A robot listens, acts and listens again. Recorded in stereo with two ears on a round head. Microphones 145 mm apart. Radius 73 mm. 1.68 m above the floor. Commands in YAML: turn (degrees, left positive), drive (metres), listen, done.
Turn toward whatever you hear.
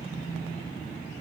listen: true
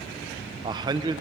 turn: -25
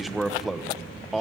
done: "Found it: a man speaking, straight ahead, 1 to 2 m away."